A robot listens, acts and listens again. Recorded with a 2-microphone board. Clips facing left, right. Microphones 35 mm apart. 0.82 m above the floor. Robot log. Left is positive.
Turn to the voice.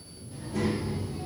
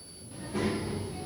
note: The child speaking: about 20° right or 160° right.
cmd yaw -20
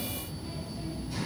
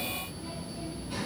note: So it is at 140° right.
cmd yaw -140
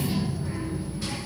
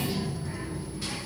note: The child speaking is now 15° left.
cmd yaw +15
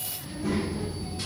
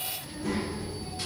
end: Found it: a child speaking, straight ahead, 1 to 2 m away.